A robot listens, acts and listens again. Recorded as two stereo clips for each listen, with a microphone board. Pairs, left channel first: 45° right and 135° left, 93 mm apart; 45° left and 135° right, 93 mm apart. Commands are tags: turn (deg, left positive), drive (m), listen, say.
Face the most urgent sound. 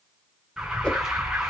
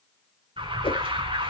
<turn deg="-140"/>
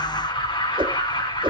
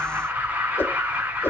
<turn deg="-65"/>
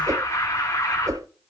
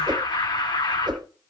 <turn deg="10"/>
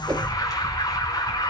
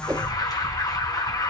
<say>Facing the alarm, over 4 m away.</say>